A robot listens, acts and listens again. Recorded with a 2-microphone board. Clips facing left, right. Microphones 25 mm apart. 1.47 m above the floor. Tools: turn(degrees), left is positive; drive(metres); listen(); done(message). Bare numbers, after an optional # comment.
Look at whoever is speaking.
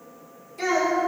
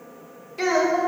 # The child speaking: about 30° right or 150° right.
turn(-30)
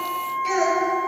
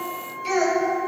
done("Facing the child speaking, 2 to 4 m away.")